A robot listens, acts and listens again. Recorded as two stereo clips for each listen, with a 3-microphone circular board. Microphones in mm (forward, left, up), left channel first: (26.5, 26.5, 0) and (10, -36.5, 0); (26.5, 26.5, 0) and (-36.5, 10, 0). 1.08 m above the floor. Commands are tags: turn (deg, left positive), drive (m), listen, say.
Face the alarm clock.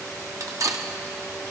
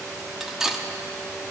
<listen/>
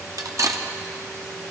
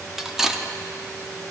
<listen/>
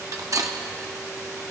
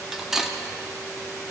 <say>I can't make out an alarm clock to turn to.</say>